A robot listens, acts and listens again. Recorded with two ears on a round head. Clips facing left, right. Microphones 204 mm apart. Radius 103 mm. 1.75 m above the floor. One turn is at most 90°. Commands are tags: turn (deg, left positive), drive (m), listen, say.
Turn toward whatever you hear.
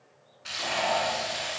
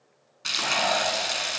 <turn deg="-75"/>
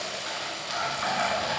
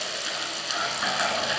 <turn deg="-25"/>
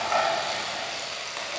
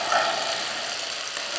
<turn deg="-15"/>
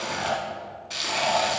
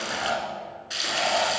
<say>Found it: frying, straight ahead, 1 to 2 m away.</say>